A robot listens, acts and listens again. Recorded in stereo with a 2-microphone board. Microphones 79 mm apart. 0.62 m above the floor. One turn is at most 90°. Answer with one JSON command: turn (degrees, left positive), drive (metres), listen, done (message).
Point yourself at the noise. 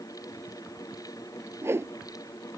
{"turn": -30}
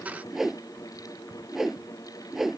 {"done": "Found it: a whoosh, straight ahead."}